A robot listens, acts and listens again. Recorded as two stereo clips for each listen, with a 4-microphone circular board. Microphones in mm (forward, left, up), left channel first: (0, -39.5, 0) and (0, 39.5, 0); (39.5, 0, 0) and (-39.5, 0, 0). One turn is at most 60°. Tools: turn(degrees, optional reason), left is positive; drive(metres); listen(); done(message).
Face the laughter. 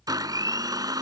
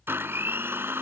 listen()
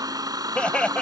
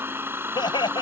turn(degrees=-15, reason="The laughter: 15° right.")
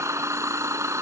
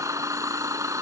listen()
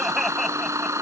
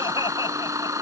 listen()
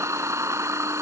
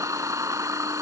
done("Facing where the laughter came from. I can't hear it now.")